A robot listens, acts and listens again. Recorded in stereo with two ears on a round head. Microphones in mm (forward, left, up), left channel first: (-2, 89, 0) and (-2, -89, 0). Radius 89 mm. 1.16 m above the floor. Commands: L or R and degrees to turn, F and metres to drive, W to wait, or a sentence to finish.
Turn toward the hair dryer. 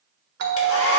L90
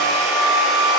Facing the hair dryer.